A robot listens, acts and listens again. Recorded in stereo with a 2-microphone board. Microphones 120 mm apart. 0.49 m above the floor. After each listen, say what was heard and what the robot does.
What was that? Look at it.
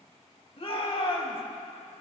The shout: about 55° left or 125° left. Turn 55° left.
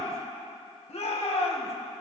So it is at 70° left. Turn 70° left.
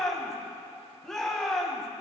Found it: a shout, straight ahead, 2 to 4 m away.